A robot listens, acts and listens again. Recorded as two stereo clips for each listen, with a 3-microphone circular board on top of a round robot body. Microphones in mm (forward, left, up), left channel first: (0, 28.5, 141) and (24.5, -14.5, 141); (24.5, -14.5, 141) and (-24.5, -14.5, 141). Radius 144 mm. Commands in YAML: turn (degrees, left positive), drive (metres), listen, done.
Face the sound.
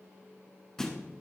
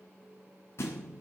turn: 40
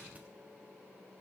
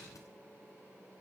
done: "Facing where the thud came from. I can't hear it now."